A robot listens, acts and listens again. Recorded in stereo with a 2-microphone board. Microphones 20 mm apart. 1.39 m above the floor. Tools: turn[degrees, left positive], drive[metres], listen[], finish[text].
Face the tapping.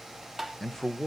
Thought: The tapping: about 20° right or 160° right.
Action: turn[-20]
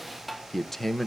Action: finish[Facing the tapping.]